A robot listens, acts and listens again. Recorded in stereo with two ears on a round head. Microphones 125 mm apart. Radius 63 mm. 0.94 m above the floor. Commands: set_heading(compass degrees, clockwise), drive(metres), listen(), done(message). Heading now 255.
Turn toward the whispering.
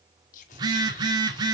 set_heading(195)
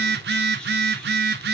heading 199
listen()
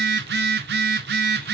listen()
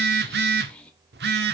set_heading(189)
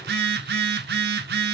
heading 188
listen()
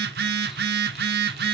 listen()
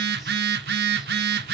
done("I heard whispering from this way, but can't make it out now.")